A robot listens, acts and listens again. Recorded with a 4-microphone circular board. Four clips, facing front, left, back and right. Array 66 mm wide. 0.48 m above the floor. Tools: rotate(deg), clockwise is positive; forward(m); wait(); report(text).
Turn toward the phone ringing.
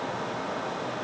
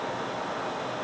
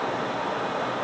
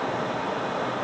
wait()
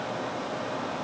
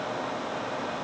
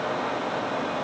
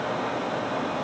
wait()
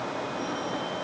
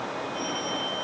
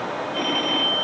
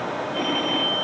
rotate(145)
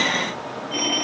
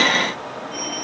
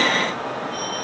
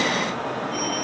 report("Facing the phone ringing.")